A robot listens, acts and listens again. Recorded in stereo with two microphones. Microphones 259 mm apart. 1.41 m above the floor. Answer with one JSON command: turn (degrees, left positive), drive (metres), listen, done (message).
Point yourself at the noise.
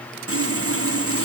{"turn": -60}
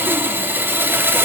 {"turn": -10}
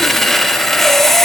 {"done": "Found it: sawing, straight ahead, under 1 m away."}